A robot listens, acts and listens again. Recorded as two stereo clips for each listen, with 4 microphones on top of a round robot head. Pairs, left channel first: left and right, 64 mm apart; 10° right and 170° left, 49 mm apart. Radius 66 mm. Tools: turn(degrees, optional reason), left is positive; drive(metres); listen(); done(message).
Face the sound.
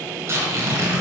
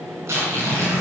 turn(degrees=-140, reason="The tearing paper: 140° right.")
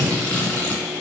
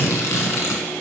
turn(degrees=15, reason="The tearing paper is now 15° left.")
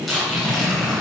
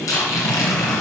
done("Facing the tearing paper.")